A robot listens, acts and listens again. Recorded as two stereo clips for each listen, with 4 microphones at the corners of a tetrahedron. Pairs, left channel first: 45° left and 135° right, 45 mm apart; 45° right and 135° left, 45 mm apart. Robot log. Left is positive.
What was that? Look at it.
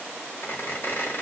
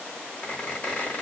note: The squeak: 15° left.
cmd yaw +15
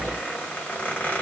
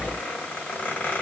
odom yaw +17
end: Facing the squeak, 1 to 2 m away.